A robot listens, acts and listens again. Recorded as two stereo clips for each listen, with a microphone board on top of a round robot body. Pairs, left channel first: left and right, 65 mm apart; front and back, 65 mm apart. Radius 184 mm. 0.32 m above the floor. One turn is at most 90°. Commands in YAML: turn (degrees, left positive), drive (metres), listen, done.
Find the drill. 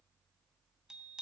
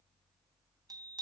listen: true
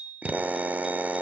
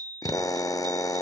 turn: -25
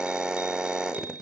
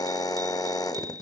turn: -10
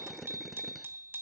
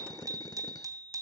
done: "Found it: a drill, straight ahead."